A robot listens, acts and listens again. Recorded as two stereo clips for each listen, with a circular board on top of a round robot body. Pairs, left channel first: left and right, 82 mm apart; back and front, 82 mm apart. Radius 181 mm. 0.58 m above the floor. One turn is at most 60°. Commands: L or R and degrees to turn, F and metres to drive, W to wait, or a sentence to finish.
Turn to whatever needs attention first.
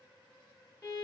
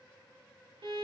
W
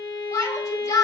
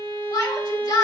L60
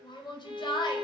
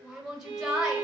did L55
L60
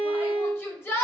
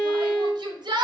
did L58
L25
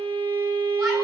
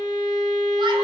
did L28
W
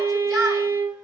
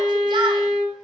W
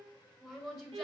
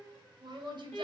Found it: a shout, straight ahead.